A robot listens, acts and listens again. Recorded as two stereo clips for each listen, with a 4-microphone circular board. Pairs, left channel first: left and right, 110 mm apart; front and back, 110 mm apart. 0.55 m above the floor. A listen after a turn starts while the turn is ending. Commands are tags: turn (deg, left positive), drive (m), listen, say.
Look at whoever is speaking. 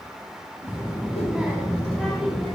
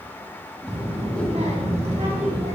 <turn deg="175"/>
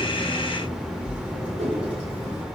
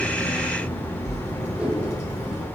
<turn deg="-10"/>
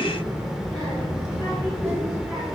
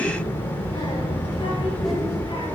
<say>Found it: a child speaking, straight ahead.</say>